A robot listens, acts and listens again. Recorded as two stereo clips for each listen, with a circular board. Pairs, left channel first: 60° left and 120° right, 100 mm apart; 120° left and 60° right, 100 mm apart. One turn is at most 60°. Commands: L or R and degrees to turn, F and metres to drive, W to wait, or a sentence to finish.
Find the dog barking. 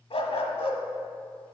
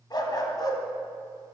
L60
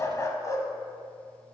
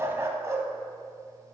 Found it: a dog barking, straight ahead, under 1 m away.